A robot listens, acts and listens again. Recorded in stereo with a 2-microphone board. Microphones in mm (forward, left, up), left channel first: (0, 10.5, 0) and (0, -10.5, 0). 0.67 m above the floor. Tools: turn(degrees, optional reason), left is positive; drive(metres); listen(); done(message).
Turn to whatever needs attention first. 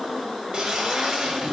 listen()
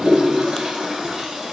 listen()
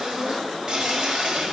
done("I can't make out anything urgent, only a toilet flushing.")